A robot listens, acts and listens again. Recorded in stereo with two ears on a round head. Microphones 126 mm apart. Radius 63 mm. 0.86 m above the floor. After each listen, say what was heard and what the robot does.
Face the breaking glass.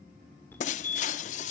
The breaking glass: about 55° left or 125° left. Turn 55° left.
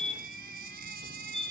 Keep listening.
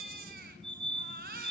I heard breaking glass, but can't make it out now. It was about straight ahead or 70° left.